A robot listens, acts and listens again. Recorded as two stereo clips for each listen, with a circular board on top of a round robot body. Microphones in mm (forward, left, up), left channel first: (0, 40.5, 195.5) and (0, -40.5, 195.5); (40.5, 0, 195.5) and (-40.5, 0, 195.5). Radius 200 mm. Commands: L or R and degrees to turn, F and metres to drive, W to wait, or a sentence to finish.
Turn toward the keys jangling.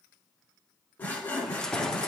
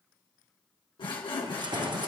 L170
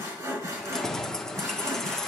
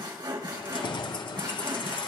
Facing the keys jangling, 1 to 2 m away.